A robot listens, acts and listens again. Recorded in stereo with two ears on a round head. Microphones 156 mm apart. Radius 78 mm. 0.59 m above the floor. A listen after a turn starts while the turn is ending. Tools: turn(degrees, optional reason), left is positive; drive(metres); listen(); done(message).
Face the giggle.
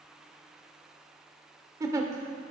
turn(degrees=-20, reason="The giggle: about 20° right or 160° right.")
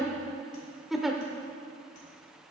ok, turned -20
done("Facing the giggle.")